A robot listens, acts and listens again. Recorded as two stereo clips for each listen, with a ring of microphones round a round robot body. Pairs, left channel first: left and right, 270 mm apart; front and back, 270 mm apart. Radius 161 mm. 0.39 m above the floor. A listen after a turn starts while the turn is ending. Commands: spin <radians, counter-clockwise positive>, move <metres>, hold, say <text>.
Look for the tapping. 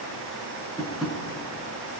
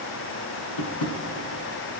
say Found it: tapping, straight ahead.